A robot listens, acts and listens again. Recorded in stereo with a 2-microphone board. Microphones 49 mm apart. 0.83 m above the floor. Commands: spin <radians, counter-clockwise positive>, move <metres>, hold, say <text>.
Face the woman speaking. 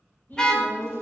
spin 0.70
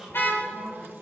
spin -0.17
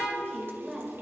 spin -0.17
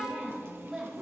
spin -0.17
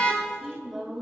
say Found it: a woman speaking, straight ahead, over 4 m away.